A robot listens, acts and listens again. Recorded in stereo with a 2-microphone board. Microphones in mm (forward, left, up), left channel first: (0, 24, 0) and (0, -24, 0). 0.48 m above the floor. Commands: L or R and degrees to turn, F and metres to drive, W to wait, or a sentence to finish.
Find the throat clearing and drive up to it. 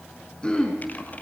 L20
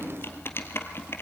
W
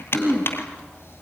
F1.0
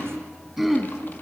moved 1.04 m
F1.0
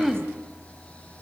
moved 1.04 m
F1.0
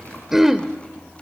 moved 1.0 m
F1.0
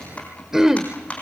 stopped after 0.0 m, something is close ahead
R10
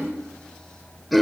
I am next to the throat clearing.